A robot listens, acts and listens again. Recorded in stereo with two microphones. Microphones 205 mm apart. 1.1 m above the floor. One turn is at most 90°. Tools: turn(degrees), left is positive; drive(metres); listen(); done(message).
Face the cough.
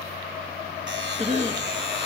turn(degrees=-35)
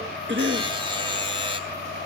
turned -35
turn(degrees=-90)
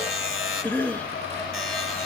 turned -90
turn(degrees=10)
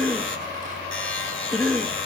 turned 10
done("Facing the cough, 2 to 4 m away.")